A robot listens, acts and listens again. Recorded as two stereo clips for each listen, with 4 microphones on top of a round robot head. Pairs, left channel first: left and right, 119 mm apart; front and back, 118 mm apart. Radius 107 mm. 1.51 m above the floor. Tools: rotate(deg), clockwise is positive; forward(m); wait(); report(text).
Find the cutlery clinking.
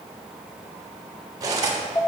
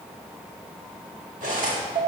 rotate(145)
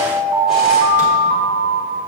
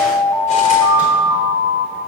wait()
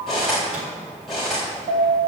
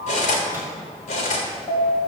report("Found it: cutlery clinking, straight ahead.")